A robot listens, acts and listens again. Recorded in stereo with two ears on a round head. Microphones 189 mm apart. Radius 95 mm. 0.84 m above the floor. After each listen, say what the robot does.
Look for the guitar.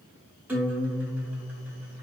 Turn 30° right.
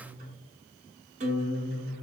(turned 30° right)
Turn 145° right.
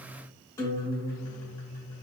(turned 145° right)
Turn 15° left.
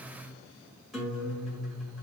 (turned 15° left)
Found it: a guitar, straight ahead, 1 to 2 m away.